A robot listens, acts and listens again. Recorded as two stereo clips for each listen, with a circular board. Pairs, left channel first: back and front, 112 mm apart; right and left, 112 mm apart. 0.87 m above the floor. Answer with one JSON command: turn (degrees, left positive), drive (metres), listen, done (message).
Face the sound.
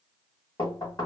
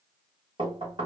{"turn": 130}
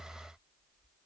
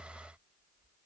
{"listen": true}
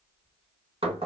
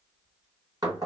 {"turn": 35}
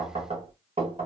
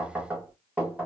{"turn": 10}
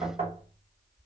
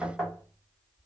{"done": "Facing the knocking, 1 to 2 m away."}